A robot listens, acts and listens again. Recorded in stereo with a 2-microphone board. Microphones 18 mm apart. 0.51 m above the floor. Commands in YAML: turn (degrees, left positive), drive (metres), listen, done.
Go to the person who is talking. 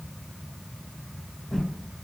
listen: true
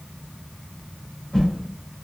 listen: true
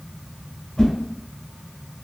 done: "I can't make out anyone speaking to turn to."